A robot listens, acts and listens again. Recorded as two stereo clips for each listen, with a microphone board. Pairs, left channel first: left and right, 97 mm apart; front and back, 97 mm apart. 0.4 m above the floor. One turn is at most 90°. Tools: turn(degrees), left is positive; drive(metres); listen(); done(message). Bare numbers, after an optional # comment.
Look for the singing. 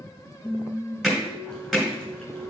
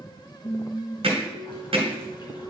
# The singing: 55° left.
turn(55)
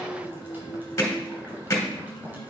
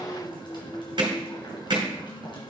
# The singing is now 20° left.
turn(20)
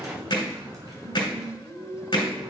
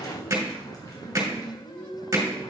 done("Found it: singing, straight ahead, over 4 m away.")